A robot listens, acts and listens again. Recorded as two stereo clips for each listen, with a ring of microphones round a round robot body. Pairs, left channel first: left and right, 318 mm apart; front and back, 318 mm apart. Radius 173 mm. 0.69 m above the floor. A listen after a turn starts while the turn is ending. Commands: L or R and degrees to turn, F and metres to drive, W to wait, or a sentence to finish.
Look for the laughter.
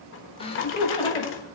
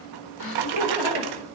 L15
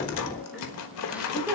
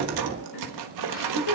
Found it: laughter, straight ahead, 2 to 4 m away.